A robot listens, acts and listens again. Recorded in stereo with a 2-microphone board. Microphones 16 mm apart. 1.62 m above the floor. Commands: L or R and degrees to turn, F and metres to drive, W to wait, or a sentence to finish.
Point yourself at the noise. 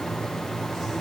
W
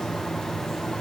W
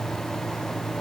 I can't make out anything to turn to.